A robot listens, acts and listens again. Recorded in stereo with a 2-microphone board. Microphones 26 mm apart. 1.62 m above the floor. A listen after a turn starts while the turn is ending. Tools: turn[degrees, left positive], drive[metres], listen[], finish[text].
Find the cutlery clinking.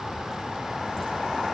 Action: listen[]
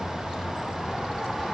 Action: listen[]
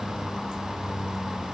Action: finish[I can't make out cutlery clinking to turn to.]